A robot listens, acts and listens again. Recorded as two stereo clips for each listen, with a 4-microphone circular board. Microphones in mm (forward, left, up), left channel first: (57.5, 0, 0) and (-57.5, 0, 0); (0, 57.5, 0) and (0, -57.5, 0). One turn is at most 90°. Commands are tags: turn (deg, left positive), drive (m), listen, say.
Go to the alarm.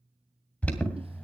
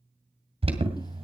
<turn deg="-75"/>
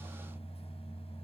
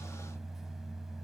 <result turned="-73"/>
<drive m="1.0"/>
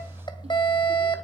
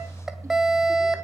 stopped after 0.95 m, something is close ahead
<say>Arrived at the alarm, straight ahead.</say>